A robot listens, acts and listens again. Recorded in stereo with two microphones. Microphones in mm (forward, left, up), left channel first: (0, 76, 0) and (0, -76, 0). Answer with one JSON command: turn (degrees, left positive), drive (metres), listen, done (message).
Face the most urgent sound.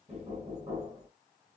{"listen": true}
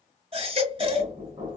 {"turn": -40}
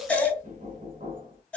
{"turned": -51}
{"turn": 10}
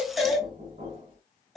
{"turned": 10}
{"done": "Found it: a baby crying, straight ahead, 1 to 2 m away."}